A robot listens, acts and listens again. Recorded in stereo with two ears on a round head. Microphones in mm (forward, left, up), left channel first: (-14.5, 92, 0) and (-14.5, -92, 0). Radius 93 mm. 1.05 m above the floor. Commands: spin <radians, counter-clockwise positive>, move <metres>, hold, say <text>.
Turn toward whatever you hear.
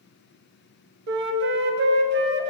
spin -0.96
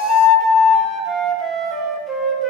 say Facing the flute, 1 to 2 m away.